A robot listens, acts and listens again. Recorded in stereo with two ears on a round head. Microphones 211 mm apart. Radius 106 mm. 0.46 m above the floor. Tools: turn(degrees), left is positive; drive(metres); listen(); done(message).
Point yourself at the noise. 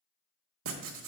turn(degrees=-60)
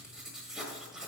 done("Found it: writing, straight ahead, 1 to 2 m away.")